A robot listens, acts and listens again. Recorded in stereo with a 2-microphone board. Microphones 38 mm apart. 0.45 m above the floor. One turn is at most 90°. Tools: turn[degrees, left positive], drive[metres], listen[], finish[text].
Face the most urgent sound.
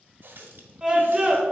Thought: The scream: about 20° right or 160° right.
Action: turn[-20]
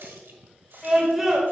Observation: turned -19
Action: finish[Found it: a scream, straight ahead, 1 to 2 m away.]